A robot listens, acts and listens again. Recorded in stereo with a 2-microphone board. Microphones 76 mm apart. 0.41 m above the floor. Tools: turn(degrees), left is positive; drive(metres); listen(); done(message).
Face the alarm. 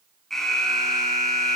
turn(degrees=30)
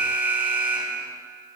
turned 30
turn(degrees=-25)
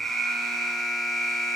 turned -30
done("Facing the alarm.")